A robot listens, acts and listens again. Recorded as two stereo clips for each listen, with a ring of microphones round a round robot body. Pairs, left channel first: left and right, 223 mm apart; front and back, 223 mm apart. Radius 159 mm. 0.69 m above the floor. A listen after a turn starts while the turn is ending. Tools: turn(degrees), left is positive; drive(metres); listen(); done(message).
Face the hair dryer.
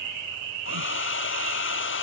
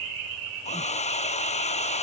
turn(degrees=60)
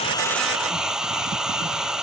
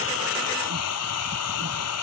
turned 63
done("Facing the hair dryer.")